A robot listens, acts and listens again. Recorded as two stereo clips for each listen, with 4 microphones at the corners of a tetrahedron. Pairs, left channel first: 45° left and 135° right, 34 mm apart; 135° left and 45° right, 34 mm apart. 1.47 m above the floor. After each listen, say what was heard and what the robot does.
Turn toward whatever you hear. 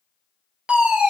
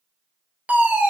The fire alarm: 80° right. Turn 80° right.
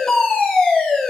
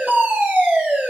The fire alarm is now 35° right. Turn 35° right.
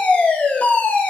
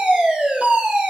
Found it: a fire alarm, straight ahead.